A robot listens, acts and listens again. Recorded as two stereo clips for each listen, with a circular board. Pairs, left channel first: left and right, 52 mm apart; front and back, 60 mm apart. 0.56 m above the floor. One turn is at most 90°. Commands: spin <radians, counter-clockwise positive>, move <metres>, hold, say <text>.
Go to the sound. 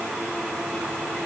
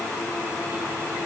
hold
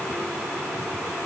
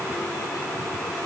hold
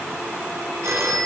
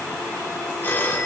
spin -1.05
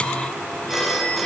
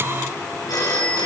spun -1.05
move 1.0
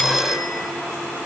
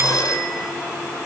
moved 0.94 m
move 1.0
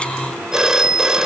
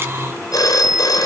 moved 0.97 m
spin -0.17
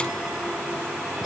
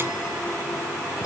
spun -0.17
hold
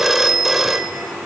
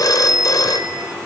move 1.0
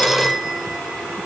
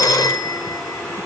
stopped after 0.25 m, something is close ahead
say I am next to the phone ringing.